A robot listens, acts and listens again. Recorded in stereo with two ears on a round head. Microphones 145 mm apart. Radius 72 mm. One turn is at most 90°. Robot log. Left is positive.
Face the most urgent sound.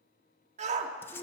note: The shout: about 45° right or 135° right.
cmd yaw -45
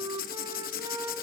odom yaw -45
cmd idle
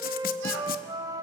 cmd idle
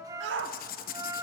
note: So it is at 90° right.
cmd yaw -90
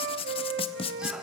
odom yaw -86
cmd idle
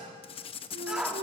end: Found it: a shout, straight ahead, 1 to 2 m away.